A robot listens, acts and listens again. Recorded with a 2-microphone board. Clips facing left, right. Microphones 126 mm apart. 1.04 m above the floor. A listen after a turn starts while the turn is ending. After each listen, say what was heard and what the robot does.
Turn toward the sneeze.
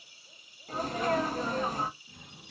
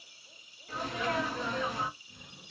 The sneeze: about 40° left or 140° left. Turn 40° left.
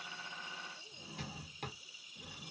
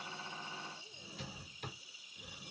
Keep listening.
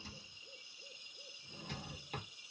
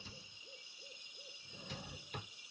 I heard a sneeze, but can't make it out now. It was about straight ahead or 100° left.